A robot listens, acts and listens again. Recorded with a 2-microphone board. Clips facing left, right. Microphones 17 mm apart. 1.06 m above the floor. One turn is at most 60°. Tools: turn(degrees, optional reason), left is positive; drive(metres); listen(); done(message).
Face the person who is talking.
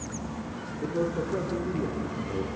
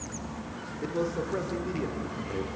turn(degrees=-45, reason="The man speaking: about 45° right or 135° right.")
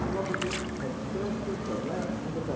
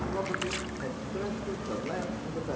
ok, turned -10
turn(degrees=-35, reason="So it is at 35° right.")
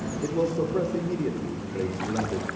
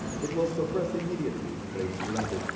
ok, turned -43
turn(degrees=10, reason="The man speaking is now 10° left.")
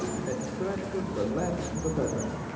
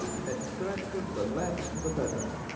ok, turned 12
done("Found it: a man speaking, straight ahead, 2 to 4 m away.")